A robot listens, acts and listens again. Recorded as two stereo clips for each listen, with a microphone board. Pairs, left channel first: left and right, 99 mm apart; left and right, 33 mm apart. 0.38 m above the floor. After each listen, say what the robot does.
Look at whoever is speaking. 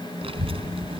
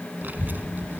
Turn 70° right.
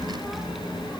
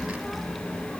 Found it: a child speaking, straight ahead.